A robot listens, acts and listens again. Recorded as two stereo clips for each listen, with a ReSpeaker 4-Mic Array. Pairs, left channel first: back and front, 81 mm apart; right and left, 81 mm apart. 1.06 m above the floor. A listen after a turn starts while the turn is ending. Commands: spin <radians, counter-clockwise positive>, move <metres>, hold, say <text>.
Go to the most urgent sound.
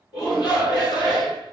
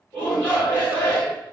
spin -2.79
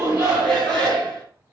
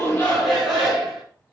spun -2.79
spin 0.17
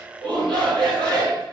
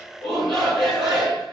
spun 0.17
move 1.0
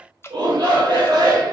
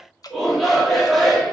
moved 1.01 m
move 1.0
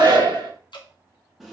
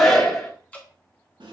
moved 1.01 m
move 1.0
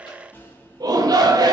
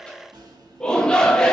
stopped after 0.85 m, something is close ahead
spin -0.17
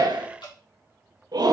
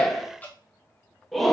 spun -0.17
say Arrived at the shout, straight ahead.